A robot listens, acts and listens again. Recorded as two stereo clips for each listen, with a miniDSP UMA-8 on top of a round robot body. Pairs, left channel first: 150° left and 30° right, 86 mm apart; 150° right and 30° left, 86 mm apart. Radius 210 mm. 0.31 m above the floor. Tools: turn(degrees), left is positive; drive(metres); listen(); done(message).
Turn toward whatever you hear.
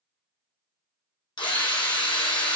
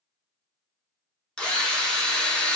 turn(degrees=130)
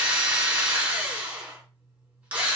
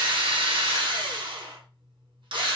turn(degrees=45)
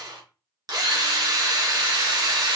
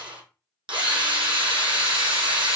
turn(degrees=10)
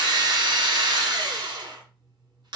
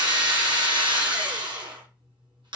done("Found it: a drill, straight ahead.")